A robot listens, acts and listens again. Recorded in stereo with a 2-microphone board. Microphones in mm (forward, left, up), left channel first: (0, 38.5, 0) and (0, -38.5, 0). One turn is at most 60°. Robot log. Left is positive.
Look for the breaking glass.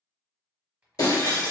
note: The breaking glass: about 50° left or 130° left.
cmd yaw +50
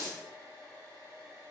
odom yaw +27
note: So it is at 95° left.
cmd yaw +60
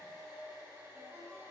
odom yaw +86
note: Nothing new. It was at 10° left.
cmd yaw +10
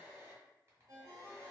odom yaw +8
end: I heard breaking glass from this way, but can't make it out now.